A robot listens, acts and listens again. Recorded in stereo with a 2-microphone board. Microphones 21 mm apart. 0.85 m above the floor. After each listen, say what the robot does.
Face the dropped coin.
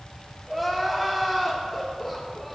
Keep listening.
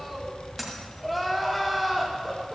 Turn 30° right.
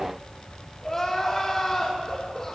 Keep listening.
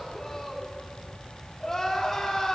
I heard a dropped coin, but can't make it out now. It was about 20° left or 140° right.